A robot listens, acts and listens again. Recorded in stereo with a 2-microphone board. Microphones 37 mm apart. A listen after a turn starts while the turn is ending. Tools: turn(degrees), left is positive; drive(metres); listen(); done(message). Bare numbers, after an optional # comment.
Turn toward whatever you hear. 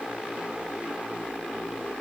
listen()
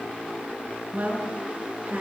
# The woman speaking: about 50° right or 130° right.
turn(-50)
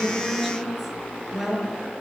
done("Found it: a woman speaking, straight ahead.")